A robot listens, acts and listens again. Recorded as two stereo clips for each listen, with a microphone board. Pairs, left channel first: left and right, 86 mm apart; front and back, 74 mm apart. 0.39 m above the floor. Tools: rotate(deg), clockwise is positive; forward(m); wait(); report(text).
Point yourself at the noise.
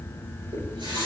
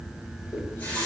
rotate(70)
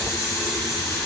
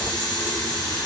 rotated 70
report("Facing the running tap, 2 to 4 m away.")